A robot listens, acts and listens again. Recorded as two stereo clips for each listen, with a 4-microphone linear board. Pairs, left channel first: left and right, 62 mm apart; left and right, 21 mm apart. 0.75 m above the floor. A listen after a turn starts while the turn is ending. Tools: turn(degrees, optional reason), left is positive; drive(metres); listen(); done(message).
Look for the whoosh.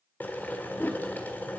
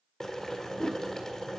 turn(degrees=35, reason="The whoosh: about 35° left or 145° left.")
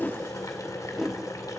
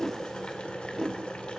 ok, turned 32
done("Facing the whoosh, under 1 m away.")